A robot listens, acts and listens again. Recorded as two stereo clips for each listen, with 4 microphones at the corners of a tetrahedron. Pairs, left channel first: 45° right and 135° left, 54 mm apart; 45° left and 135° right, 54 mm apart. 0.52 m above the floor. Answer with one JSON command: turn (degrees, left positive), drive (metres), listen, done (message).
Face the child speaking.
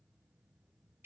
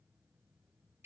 {"listen": true}
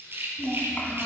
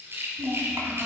{"turn": -105}
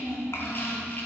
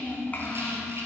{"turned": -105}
{"turn": -10}
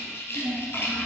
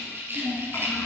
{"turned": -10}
{"done": "Facing the child speaking, 2 to 4 m away."}